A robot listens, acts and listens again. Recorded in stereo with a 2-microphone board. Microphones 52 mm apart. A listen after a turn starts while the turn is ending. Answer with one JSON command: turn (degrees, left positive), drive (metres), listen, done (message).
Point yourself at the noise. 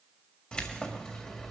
{"turn": 30}
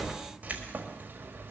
{"turn": -40}
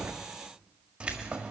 {"turn": -25}
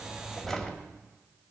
{"done": "Facing the keys jangling."}